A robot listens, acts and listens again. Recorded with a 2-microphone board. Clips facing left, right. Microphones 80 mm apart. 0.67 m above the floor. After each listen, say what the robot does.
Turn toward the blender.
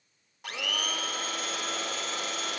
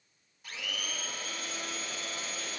Turn 70° left.
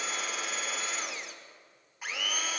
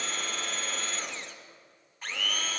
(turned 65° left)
Turn 10° left.
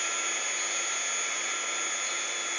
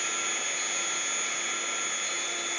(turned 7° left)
Facing the blender, under 1 m away.